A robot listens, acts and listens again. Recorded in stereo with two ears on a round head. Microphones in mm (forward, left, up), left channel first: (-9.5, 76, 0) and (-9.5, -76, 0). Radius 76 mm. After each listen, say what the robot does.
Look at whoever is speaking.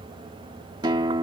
Keep listening.
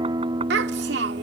Turn 90° right.
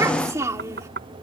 Turn 15° right.
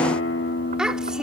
Found it: a child speaking, straight ahead.